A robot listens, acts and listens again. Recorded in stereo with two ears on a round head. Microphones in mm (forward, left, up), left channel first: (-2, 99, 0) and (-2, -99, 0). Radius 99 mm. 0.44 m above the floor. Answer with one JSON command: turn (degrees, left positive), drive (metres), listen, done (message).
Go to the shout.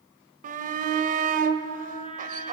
{"turn": -40}
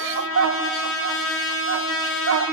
{"turn": -95}
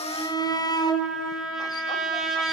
{"turn": 20}
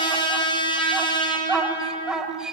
{"drive": 1.0}
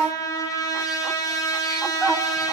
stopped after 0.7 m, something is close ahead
{"done": "Arrived at the shout, straight ahead."}